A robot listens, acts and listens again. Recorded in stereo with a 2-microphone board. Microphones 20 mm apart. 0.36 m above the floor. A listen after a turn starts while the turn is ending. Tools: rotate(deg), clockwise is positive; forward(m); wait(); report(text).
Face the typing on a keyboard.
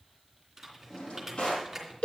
rotate(15)
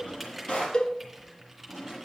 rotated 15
report("Found it: typing on a keyboard, straight ahead, 2 to 4 m away.")